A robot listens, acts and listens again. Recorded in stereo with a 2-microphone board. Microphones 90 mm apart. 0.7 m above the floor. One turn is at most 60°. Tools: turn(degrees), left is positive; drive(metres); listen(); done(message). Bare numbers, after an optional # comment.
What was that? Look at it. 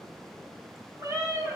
# The cat meowing: about 35° right or 145° right.
turn(-35)
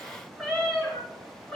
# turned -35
# So it is at 10° left.
turn(10)
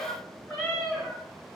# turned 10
done("Found it: a cat meowing, straight ahead, 2 to 4 m away.")